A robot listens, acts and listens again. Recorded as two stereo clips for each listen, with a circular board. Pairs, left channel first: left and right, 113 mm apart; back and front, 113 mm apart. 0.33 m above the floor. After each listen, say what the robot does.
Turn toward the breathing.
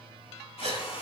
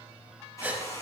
Turn 70° right.
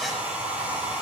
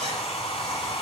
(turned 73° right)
Keep listening.
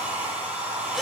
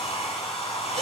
Keep listening.
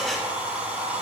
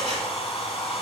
I heard breathing from this way, but can't make it out now.